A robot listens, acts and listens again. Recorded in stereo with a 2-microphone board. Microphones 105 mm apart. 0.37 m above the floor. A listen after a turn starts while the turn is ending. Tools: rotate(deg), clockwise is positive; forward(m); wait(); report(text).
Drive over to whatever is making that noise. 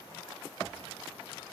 wait()
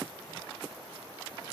wait()
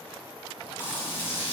rotate(-20)
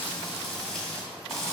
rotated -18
forward(1.0)
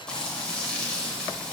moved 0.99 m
rotate(-10)
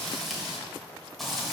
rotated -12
forward(1.0)
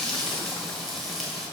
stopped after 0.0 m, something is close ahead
report("Arrived at the frying, straight ahead.")